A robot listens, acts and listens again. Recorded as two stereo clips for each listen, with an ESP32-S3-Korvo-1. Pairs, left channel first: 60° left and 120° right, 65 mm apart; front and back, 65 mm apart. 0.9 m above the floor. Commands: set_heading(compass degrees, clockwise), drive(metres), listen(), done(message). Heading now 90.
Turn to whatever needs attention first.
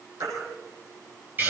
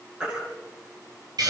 set_heading(200)
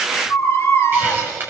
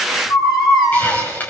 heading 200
set_heading(190)
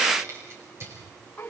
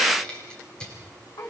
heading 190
listen()
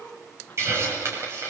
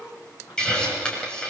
listen()
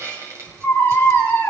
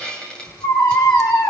done("Found it: a baby crying, straight ahead.")